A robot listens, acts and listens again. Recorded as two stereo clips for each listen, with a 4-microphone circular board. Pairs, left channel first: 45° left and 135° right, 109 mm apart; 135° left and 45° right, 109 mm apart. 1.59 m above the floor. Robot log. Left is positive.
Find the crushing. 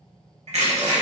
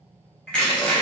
note: The crushing: 145° right.
cmd yaw -145
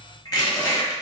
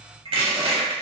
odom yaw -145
note: The crushing is now 10° right.
cmd yaw -10
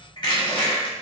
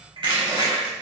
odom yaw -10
end: Facing the crushing, under 1 m away.